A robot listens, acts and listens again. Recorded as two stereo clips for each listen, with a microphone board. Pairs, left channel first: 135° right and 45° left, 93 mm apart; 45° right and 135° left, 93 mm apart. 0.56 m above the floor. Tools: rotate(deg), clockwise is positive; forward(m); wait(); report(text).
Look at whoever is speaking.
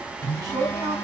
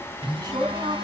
rotate(-90)
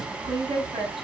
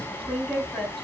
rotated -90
rotate(-40)
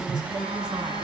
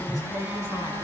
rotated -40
wait()
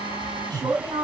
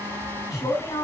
report("Facing the man speaking, over 4 m away.")